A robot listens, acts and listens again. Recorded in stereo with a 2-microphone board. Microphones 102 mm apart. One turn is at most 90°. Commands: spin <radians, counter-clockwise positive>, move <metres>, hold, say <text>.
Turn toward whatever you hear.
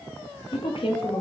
spin 0.96
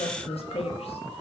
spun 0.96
spin 1.22
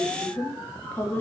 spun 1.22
spin 0.26
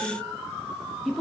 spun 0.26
say Found it: a woman speaking, straight ahead, under 1 m away.